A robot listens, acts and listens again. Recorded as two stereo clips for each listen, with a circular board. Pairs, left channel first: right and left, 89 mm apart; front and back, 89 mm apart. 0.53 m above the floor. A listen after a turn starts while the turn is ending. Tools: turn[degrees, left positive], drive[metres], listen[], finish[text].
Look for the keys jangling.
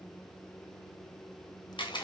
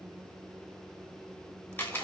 Action: listen[]
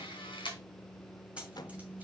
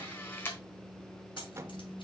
Thought: The keys jangling: 15° left.
Action: turn[15]
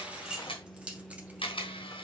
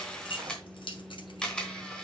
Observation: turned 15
Thought: The keys jangling is now 15° left.
Action: turn[15]
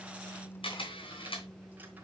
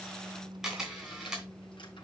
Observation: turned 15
Action: listen[]
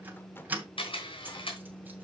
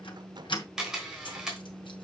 Thought: The keys jangling is now 20° left.
Action: turn[20]
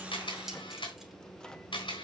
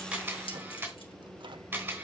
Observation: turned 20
Action: listen[]
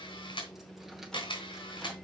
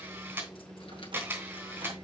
Action: listen[]
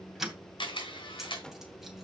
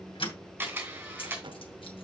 Action: finish[Found it: keys jangling, straight ahead, 2 to 4 m away.]